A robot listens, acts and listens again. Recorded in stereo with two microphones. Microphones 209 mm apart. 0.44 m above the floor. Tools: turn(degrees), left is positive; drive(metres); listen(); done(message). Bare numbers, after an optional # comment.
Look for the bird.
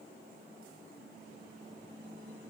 listen()
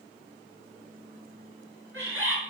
turn(-90)
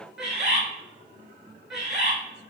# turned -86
done("Facing the bird.")